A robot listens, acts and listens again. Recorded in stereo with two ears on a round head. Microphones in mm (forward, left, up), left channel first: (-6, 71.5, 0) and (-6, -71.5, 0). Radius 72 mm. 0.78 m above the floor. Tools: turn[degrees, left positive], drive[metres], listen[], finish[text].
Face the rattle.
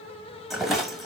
Action: turn[30]
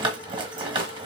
Thought: So it is at 30° right.
Action: turn[-30]
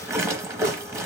Thought: The rattle is now 20° right.
Action: turn[-20]
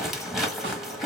Action: finish[Facing the rattle.]